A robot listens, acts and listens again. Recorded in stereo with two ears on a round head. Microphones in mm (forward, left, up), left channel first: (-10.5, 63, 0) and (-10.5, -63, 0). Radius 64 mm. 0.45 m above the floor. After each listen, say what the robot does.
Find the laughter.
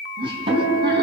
Turn 35° right.
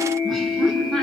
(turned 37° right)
Facing the laughter.